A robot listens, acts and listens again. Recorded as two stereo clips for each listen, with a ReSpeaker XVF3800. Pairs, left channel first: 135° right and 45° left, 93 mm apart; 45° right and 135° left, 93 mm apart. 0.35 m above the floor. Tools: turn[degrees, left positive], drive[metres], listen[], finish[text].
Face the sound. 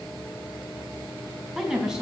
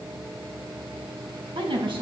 Thought: The woman speaking: 125° left.
Action: turn[125]
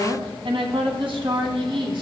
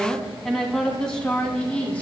Thought: The woman speaking is now 30° left.
Action: turn[30]
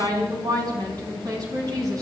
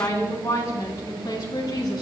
Action: finish[Facing the woman speaking, over 4 m away.]